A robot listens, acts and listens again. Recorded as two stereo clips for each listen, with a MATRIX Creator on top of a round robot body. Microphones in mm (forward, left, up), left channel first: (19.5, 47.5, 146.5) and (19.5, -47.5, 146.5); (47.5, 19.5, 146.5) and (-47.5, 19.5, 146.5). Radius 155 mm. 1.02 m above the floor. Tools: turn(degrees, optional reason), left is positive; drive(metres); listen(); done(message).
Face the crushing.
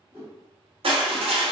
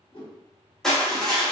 turn(degrees=-85, reason="The crushing: 85° right.")
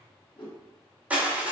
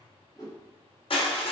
turn(degrees=-15, reason="The crushing is now 15° right.")
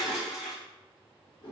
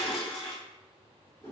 done("Facing the crushing.")